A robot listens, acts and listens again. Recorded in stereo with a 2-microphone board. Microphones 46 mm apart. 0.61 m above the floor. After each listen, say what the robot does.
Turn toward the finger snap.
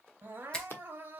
Turn 15° left.
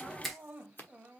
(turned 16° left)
Found it: a finger snap, straight ahead.